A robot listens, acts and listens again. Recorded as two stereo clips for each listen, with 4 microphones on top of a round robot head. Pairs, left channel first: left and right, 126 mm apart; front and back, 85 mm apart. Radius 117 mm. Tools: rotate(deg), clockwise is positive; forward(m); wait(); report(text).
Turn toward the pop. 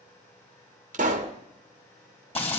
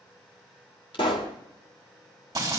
rotate(50)
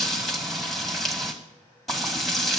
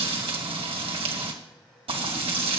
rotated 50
report("I heard a pop from this way, but can't make it out now.")